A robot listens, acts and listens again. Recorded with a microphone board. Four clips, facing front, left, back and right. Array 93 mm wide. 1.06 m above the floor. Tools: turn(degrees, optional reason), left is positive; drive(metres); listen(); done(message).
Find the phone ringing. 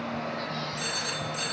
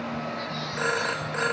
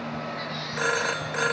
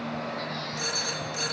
turn(degrees=145, reason="The phone ringing: 145° left.")
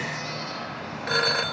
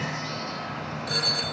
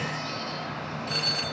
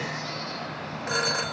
turn(degrees=-20, reason="The phone ringing is now 20° right.")
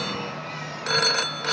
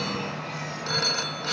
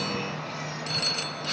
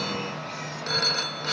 done("Found it: a phone ringing, straight ahead.")